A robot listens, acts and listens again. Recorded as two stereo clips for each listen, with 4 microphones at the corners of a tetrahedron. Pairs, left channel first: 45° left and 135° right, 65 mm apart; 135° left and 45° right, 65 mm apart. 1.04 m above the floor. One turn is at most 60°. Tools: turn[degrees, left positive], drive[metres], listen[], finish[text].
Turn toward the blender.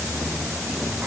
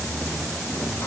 Action: listen[]
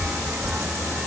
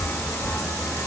Action: listen[]
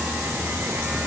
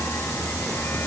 Action: finish[I can't make out a blender to turn to.]